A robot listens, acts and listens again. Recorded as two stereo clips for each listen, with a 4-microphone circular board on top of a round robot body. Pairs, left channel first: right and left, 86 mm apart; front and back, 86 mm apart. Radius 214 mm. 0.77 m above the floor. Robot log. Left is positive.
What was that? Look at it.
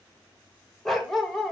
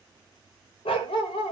end: Found it: a dog barking, straight ahead.